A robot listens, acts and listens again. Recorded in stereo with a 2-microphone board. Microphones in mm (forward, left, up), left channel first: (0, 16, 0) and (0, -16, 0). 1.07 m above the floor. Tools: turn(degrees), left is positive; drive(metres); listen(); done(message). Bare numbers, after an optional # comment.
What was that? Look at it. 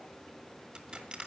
# The crushing: about 30° right or 150° right.
turn(-30)
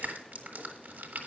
# So it is at 120° right.
turn(-120)
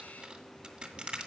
# The crushing is now 25° right.
turn(-25)
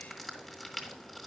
done("Facing the crushing, 1 to 2 m away.")